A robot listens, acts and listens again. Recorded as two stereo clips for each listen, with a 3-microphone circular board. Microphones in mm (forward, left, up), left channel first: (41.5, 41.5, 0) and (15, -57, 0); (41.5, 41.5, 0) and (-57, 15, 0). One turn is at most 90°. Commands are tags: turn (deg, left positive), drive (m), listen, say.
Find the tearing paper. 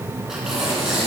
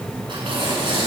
<turn deg="90"/>
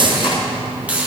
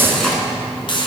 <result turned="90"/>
<turn deg="90"/>
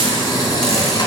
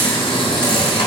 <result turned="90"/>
<turn deg="30"/>
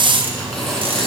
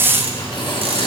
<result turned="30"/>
<turn deg="-10"/>
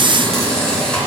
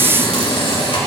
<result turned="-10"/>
<say>Facing the tearing paper, 2 to 4 m away.</say>